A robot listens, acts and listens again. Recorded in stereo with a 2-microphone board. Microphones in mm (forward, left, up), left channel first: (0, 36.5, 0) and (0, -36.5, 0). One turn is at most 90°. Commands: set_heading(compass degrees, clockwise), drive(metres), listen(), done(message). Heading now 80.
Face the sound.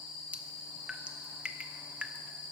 set_heading(110)
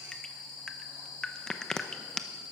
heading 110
set_heading(100)
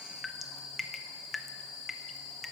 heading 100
done("Found it: dripping, straight ahead, under 1 m away.")